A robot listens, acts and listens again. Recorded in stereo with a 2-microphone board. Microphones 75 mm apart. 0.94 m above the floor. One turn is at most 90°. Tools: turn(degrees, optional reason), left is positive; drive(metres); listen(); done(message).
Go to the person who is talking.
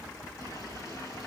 listen()
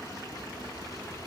listen()
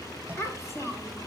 turn(degrees=40, reason="The child speaking: about 40° left or 140° left.")
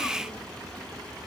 listen()
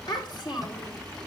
turn(degrees=90, reason="So it is at 100° left.")
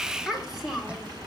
drive(metres=1.0)
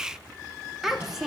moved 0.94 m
drive(metres=1.0)
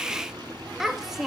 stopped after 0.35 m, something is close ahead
done("I am next to the child speaking.")